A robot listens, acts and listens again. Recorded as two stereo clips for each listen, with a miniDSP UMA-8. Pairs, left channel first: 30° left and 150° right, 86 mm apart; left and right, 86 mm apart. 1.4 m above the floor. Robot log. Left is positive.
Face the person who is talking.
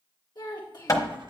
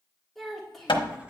end: Found it: a child speaking, straight ahead, 1 to 2 m away.